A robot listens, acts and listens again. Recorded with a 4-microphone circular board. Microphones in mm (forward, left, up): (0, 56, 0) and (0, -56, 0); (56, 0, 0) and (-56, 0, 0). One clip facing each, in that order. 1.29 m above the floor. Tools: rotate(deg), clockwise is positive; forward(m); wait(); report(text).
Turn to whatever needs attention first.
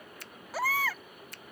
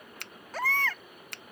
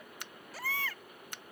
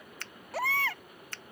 rotate(-170)
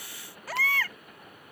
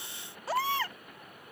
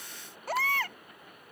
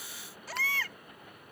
rotate(30)
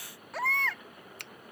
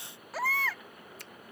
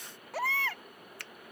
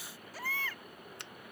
report("Facing the baby crying.")